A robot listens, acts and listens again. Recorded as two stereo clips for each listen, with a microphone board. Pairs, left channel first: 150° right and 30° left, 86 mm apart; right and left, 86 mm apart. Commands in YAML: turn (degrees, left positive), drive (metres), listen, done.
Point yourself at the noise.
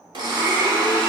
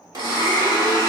turn: 50
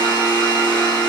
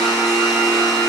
done: "Found it: a blender, straight ahead, 1 to 2 m away."